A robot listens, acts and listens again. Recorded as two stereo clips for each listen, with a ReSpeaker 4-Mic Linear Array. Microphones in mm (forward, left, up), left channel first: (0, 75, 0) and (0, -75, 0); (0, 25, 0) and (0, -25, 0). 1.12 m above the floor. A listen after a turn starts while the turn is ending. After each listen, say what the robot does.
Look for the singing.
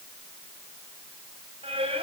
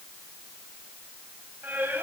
Turn 40° right.
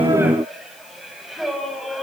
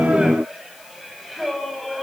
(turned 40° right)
Found it: singing, straight ahead, 2 to 4 m away.